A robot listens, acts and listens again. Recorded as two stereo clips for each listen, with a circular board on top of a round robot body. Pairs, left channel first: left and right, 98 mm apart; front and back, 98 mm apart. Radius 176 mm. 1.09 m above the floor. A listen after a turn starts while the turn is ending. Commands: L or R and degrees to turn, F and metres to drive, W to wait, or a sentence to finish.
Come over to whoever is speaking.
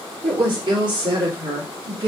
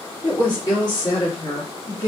R50
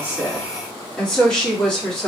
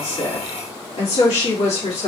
L10
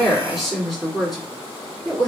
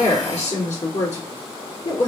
F1.0
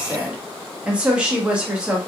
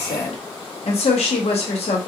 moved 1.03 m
R10
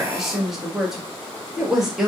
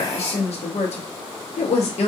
F1.0
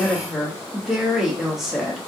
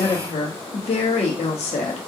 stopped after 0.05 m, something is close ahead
Arrived at the woman speaking, straight ahead.